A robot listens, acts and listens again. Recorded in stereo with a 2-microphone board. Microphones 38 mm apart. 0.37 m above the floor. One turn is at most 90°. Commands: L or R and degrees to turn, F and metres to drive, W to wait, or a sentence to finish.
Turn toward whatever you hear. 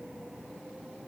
W
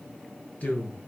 L45
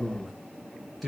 Facing the man speaking.